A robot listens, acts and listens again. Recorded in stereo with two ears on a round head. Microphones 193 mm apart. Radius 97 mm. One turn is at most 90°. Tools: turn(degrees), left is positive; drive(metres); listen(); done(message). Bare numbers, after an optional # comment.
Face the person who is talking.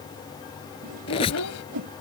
turn(90)
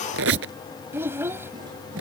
# So it is at 10° right.
turn(-10)
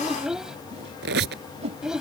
done("Found it: a child speaking, straight ahead.")